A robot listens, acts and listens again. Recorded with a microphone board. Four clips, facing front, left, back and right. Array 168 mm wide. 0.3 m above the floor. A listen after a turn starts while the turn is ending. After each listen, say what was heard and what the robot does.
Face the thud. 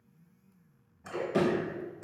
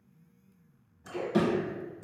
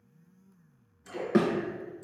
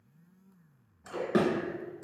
The thud: 140° right. Turn 140° right.
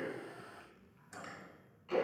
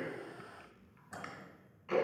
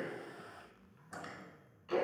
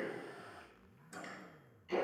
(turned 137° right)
I heard a thud from this way, but can't make it out now.